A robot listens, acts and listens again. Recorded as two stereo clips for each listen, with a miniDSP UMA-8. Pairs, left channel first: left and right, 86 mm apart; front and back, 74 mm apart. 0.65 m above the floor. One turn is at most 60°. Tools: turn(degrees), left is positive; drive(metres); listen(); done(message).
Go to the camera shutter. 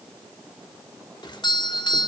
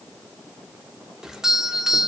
listen()
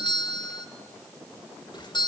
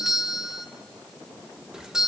listen()
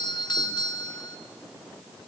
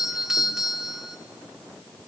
done("I can't make out a camera shutter to turn to.")